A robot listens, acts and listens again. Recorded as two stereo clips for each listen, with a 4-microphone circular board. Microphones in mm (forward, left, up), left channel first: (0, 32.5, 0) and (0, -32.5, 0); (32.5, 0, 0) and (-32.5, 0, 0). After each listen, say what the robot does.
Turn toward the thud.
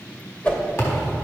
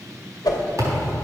Turn 140° left.
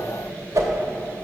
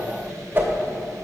Facing where the thud came from. I can't hear it now.